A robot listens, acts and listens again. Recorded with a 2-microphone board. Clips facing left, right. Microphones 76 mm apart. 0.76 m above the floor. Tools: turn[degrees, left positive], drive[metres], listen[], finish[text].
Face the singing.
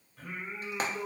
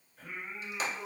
Thought: The singing: about 70° left or 110° left.
Action: turn[70]
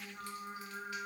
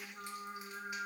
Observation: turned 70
Thought: So it is at 15° left.
Action: turn[15]
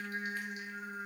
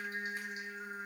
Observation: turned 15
Thought: The singing is now 10° right.
Action: turn[-10]
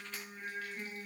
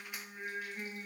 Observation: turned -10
Thought: The singing is now 20° right.
Action: turn[-20]
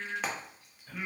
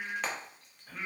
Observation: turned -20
Thought: The singing is now 15° right.
Action: turn[-15]
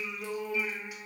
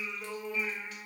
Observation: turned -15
Thought: The singing is now 15° right.
Action: turn[-15]
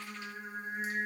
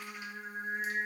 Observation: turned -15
Action: finish[Facing the singing.]